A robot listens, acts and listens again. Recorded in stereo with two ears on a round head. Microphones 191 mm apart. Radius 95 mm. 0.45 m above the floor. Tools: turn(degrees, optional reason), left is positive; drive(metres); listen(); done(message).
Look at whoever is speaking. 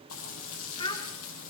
turn(degrees=20, reason="The child speaking: about 20° left or 160° left.")
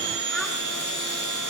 listen()
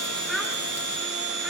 done("Facing the child speaking.")